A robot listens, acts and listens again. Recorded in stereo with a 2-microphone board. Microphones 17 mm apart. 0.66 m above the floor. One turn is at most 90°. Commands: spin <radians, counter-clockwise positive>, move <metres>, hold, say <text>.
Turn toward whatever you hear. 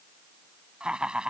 spin -1.22
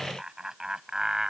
spin -0.70
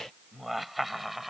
say Facing the laughter.